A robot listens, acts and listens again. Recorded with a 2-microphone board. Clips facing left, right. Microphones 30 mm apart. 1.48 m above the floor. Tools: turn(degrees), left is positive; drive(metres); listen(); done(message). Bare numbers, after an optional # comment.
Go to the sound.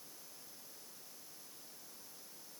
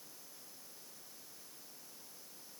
listen()
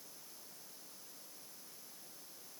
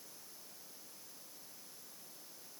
listen()
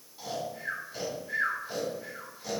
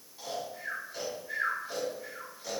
turn(30)
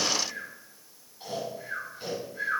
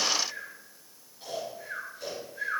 # So it is at 145° left.
turn(145)
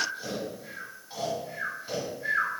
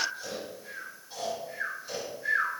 # The snoring is now 40° left.
turn(40)
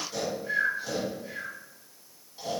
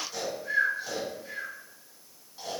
drive(1.0)
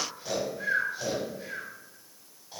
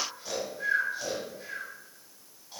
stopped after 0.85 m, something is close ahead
# The snoring is now 10° left.
turn(10)
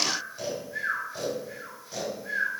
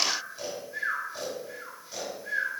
done("I am next to the snoring.")